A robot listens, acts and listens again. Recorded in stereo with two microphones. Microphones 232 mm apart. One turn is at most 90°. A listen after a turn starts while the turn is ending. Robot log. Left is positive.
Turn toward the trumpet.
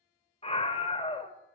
cmd idle
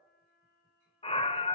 note: The trumpet: about 55° left or 125° left.
cmd yaw +55
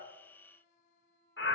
note: So it is at 50° left.
cmd yaw +50
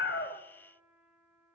end: Facing the trumpet.